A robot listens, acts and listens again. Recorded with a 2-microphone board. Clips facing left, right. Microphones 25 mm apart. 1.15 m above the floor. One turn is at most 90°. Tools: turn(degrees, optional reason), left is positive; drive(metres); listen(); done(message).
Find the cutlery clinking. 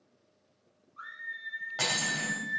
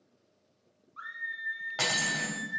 turn(degrees=-25, reason="The cutlery clinking: about 25° right or 155° right.")
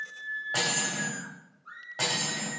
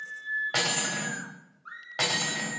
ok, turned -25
turn(degrees=-90, reason="So it is at 130° right.")
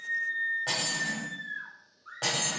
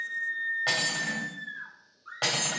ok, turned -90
turn(degrees=-35, reason="The cutlery clinking is now 35° right.")
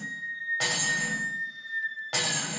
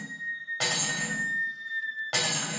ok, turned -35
done("Found it: cutlery clinking, straight ahead.")